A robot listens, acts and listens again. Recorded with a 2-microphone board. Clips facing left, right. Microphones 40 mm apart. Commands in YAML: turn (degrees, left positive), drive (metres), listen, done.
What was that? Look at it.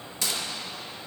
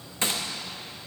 turn: -30
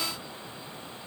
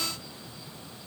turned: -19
listen: true
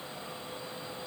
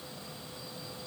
done: "I heard a gunshot, but can't make it out now. It was about 15° right or 130° right."